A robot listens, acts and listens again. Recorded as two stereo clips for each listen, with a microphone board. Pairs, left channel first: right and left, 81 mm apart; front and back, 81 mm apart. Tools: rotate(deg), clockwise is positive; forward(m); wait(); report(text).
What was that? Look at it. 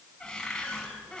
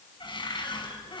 rotate(10)
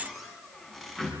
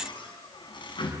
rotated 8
report("Facing the cupboard door, over 4 m away.")